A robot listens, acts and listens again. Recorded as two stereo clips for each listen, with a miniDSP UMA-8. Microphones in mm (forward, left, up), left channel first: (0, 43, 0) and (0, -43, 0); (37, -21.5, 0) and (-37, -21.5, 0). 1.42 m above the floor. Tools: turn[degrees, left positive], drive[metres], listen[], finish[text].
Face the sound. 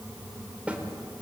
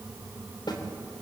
Thought: The snare drum: 15° right.
Action: turn[-15]
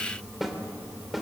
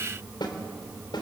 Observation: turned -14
Action: finish[Found it: a snare drum, straight ahead.]